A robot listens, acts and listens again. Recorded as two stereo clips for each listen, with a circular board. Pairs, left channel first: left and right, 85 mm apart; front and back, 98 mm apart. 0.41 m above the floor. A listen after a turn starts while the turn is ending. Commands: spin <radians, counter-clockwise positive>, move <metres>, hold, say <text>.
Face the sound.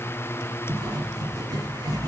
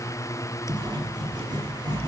spin -2.36
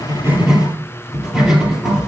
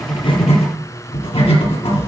spin -0.17
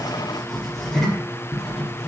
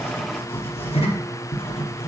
say Found it: writing, straight ahead, 2 to 4 m away.